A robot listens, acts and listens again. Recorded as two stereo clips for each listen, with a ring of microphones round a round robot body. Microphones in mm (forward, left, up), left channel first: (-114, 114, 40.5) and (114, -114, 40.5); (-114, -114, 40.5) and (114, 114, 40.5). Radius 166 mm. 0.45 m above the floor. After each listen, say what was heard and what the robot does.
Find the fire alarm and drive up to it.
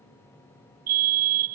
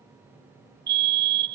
The fire alarm: 10° right. Turn 10° right.
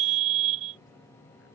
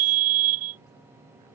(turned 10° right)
Drive 1.0 m forward.
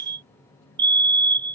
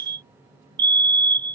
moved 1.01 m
Drive 1.0 m forward.
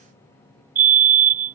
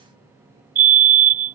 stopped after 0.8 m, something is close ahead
I am next to the fire alarm.